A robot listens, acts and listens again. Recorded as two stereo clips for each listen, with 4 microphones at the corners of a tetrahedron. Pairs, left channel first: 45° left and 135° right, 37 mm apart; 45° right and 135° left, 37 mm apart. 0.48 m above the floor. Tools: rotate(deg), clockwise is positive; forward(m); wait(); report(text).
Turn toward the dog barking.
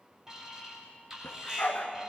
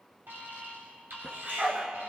rotate(-80)
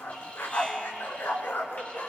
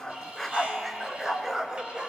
rotate(-70)
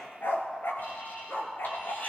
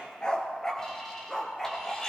rotate(-40)
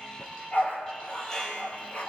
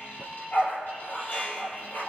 report("Facing the dog barking.")